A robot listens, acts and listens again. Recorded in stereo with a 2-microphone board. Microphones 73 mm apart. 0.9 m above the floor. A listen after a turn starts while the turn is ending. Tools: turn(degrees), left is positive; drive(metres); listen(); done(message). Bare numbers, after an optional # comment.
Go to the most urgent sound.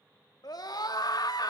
# The scream: about 65° left or 115° left.
turn(65)
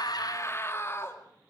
# So it is at 40° left.
turn(40)
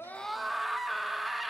drive(1.0)
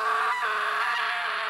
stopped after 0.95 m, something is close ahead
done("Arrived at the scream, straight ahead.")